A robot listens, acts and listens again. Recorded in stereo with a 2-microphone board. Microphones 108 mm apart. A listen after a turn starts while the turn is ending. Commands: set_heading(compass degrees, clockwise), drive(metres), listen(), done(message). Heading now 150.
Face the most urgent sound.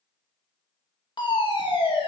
set_heading(100)
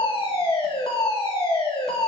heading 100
set_heading(30)
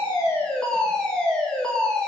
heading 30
set_heading(20)
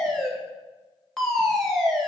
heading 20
done("Facing the fire alarm.")